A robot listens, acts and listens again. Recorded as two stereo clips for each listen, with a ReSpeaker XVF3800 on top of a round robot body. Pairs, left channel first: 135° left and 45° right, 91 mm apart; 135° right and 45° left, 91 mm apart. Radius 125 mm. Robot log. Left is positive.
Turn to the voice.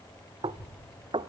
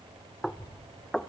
note: The child speaking: straight behind.
cmd yaw +180
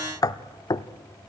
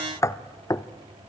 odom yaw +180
cmd idle
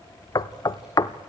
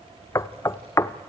note: The child speaking is now 40° left.
cmd yaw +40
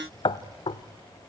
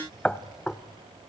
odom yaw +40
end: Found it: a child speaking, straight ahead.